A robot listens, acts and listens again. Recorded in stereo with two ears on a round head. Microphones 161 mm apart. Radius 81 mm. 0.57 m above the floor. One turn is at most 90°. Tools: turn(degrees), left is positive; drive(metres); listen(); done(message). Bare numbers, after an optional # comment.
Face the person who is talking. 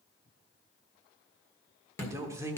# The man speaking: about 15° right or 165° right.
turn(-15)
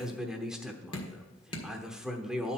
done("Found it: a man speaking, straight ahead, 1 to 2 m away.")